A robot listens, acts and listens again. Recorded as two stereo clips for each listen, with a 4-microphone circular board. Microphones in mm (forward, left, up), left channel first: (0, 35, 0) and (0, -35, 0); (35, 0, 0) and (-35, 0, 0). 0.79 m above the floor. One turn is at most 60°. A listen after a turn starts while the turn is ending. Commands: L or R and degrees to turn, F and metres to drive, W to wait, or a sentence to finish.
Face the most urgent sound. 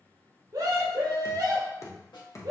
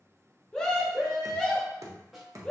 R60
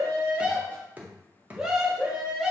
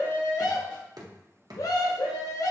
R10
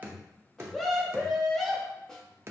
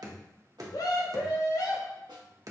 Found it: a scream, straight ahead.